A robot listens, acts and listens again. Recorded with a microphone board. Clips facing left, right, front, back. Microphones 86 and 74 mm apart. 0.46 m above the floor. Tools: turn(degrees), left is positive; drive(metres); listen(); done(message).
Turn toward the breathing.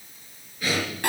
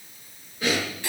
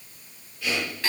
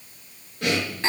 turn(degrees=-155)
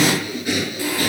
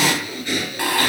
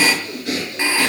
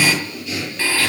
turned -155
turn(degrees=15)
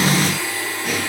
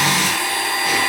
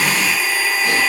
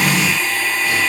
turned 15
listen()
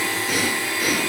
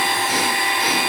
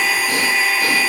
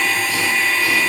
listen()
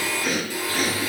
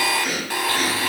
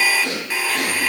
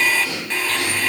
done("Facing the breathing.")